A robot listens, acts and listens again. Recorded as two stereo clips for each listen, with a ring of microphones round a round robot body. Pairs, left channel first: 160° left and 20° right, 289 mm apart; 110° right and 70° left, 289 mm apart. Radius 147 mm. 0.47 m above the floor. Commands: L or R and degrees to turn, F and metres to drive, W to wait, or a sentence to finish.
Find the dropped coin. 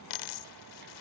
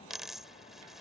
L155
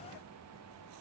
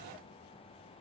I heard a dropped coin from this way, but can't make it out now.